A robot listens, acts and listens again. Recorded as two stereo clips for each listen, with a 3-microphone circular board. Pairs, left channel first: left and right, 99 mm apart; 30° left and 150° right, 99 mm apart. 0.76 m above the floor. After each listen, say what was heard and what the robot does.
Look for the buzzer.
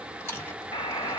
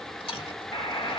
The buzzer: 70° left. Turn 70° left.
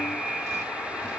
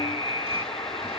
Facing the buzzer.